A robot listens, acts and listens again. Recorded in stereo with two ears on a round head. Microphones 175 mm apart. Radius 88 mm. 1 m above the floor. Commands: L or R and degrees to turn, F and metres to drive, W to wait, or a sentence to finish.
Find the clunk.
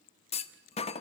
L30
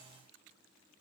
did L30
W
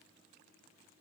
I heard a clunk, but can't make it out now. It was about straight ahead or 120° left.